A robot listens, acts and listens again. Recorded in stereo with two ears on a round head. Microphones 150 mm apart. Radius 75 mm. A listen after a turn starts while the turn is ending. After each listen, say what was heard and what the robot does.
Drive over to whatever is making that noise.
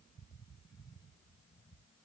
Keep listening.
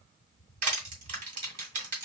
The crushing: about 50° right or 130° right. Turn 50° right.
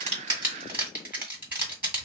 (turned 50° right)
So it is at 15° right. Turn 15° right.
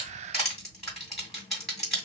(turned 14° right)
Drive 1.0 m forward.
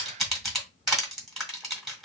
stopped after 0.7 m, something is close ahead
I am next to the crushing.